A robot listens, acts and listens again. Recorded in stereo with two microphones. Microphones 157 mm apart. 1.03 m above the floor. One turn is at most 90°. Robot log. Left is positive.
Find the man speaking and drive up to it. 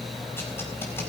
cmd idle
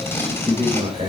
note: The man speaking: about 40° right or 140° right.
cmd yaw -40
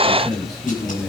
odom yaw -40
cmd fwd 1.0
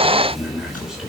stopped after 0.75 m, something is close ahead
end: Something is in my way. I am facing the man speaking but have not reached it.